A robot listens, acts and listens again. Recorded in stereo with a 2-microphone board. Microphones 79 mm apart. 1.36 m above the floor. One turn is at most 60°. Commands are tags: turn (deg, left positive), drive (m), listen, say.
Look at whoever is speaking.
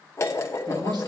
<turn deg="-60"/>
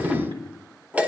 <turn deg="-60"/>
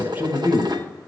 <turn deg="-30"/>
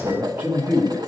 <turn deg="-30"/>
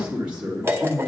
<turn deg="-15"/>
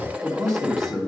<say>Found it: a man speaking, straight ahead.</say>